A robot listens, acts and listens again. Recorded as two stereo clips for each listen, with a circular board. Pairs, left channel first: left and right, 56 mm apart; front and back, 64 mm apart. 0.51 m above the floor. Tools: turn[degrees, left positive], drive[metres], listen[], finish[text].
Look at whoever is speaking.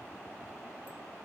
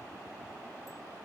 Action: listen[]
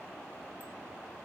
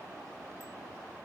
Action: listen[]
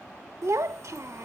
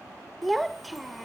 Thought: The child speaking: 90° right.
Action: turn[-90]
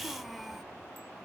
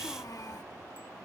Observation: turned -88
Action: finish[Found it: a child speaking, straight ahead.]